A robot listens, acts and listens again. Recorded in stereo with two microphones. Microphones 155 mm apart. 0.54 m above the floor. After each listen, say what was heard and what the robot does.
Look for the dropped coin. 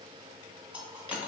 Turn 30° right.
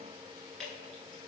Keep listening.
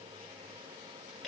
I heard a dropped coin, but can't make it out now. It was about 20° left or 140° right.